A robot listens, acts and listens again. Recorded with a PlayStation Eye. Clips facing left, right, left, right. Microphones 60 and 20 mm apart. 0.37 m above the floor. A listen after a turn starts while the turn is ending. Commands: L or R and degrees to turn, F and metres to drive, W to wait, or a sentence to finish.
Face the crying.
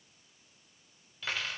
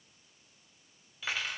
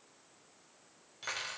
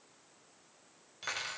W
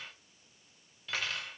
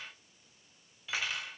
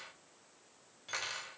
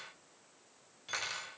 W
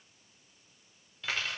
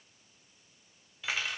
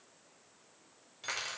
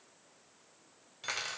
I can't make out crying, only cutlery clinking.